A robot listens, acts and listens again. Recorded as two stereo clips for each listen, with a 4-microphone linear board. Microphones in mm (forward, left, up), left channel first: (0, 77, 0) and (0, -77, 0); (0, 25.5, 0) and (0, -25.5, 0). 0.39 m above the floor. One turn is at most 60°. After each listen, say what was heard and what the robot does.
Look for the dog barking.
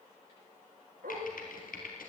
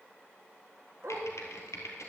Turn 60° right.
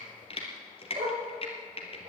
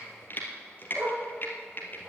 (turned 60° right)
So it is at 55° right. Turn 55° right.
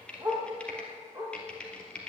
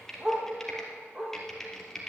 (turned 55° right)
The dog barking is now 30° right. Turn 30° right.
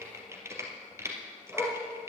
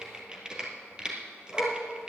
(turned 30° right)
Found it: a dog barking, straight ahead, over 4 m away.